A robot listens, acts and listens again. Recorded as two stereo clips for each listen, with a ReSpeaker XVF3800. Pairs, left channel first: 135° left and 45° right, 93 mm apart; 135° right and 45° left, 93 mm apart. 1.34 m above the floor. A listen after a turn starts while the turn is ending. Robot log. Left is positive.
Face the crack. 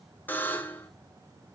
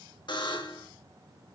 cmd idle
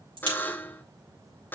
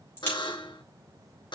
note: The crack: 70° right.
cmd yaw -70
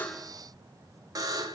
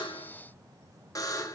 end: I heard a crack from this way, but can't make it out now.